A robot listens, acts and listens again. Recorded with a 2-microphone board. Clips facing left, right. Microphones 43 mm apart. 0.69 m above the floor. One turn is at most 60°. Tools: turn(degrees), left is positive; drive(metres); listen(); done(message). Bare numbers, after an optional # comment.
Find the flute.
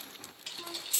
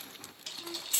# The flute: about 50° left or 130° left.
turn(50)
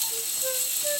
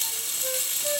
done("Found it: a flute, straight ahead, 2 to 4 m away.")